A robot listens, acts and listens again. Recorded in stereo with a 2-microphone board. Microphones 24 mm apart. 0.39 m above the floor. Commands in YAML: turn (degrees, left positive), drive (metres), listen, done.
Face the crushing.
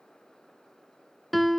listen: true
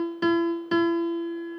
listen: true
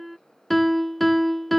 done: "I can't make out crushing, only a piano."